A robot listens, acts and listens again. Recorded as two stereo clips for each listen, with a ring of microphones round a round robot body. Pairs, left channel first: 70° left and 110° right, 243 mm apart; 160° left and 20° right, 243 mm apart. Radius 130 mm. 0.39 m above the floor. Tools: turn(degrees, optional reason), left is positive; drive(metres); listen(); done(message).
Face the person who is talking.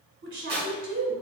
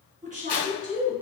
turn(degrees=-80, reason="The woman speaking: 80° right.")
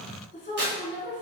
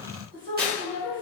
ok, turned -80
turn(degrees=10, reason="The woman speaking is now 10° left.")
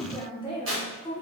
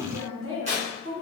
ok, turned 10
done("Found it: a woman speaking, straight ahead, 1 to 2 m away.")